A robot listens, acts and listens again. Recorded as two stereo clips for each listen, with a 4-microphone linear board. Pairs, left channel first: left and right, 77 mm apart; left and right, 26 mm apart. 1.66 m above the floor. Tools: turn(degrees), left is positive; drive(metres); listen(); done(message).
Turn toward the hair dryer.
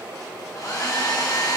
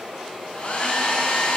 turn(degrees=50)
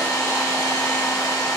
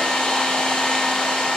turn(degrees=65)
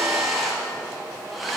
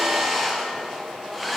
done("Found it: a hair dryer, straight ahead.")